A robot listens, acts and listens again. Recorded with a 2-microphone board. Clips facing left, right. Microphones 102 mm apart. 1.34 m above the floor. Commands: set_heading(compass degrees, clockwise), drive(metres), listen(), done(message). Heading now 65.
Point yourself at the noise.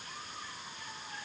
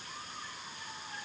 listen()
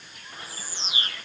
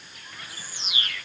set_heading(35)
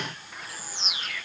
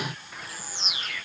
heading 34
done("Facing the bird.")